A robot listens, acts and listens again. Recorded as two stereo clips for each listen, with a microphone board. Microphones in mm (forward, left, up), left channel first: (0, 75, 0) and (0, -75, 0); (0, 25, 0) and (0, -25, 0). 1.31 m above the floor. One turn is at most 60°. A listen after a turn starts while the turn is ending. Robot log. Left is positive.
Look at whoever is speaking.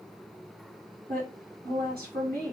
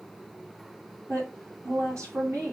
cmd yaw -60
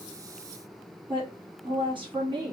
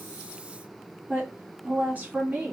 note: So it is at 30° right.
cmd yaw -30
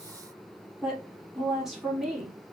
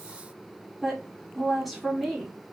end: Found it: a woman speaking, straight ahead.